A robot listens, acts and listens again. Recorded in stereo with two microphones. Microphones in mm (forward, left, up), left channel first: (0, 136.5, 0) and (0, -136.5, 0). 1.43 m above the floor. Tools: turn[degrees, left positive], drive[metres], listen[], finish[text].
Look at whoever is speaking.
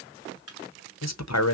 Thought: The man speaking: about 75° left or 105° left.
Action: turn[75]
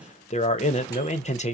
Thought: So it is at 25° left.
Action: turn[25]
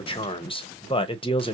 Thought: The man speaking is now 20° left.
Action: turn[20]
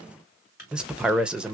Action: finish[Facing the man speaking.]